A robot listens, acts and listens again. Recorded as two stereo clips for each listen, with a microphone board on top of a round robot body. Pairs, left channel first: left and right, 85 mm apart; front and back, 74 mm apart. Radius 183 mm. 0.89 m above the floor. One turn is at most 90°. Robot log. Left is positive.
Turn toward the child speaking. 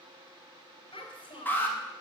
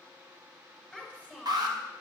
note: The child speaking: 100° left.
cmd yaw +90
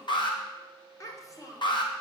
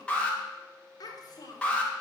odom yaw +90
note: The child speaking is now 40° left.
cmd yaw +40
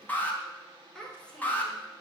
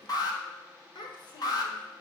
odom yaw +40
note: The child speaking is now 10° left.
cmd yaw +10
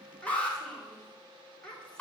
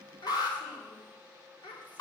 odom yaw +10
note: The child speaking is now 10° left.
cmd yaw +10
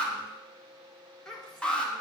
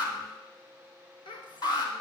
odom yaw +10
end: Facing the child speaking.